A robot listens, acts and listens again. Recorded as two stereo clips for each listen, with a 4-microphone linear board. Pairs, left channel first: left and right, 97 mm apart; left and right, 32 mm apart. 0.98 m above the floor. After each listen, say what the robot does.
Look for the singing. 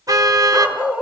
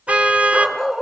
Keep listening.
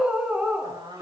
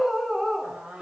Turn 45° right.
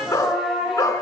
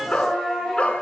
Facing the singing.